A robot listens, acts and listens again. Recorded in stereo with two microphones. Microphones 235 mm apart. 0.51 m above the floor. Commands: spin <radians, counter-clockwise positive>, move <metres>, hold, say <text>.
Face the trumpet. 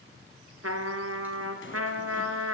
spin -1.57
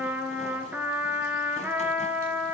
spin -0.17
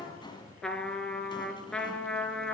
say Found it: a trumpet, straight ahead.